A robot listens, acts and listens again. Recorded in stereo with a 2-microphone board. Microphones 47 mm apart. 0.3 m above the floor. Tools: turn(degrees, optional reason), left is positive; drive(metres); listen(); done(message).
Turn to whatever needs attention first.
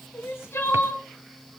turn(degrees=55, reason="The crying: about 55° left or 125° left.")
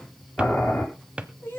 turn(degrees=60, reason="So it is at 60° left.")
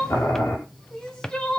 turn(degrees=20, reason="The crying is now 20° left.")
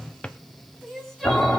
done("Facing the crying, 2 to 4 m away.")